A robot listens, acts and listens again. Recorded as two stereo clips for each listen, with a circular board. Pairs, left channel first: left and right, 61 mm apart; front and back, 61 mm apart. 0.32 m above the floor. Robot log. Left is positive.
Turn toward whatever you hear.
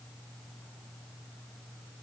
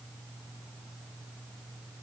cmd idle
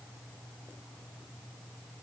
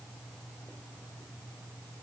cmd idle
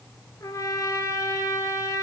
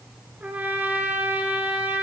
note: The trumpet: 115° left.
cmd yaw +115
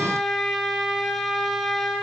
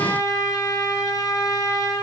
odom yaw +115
end: Facing the trumpet.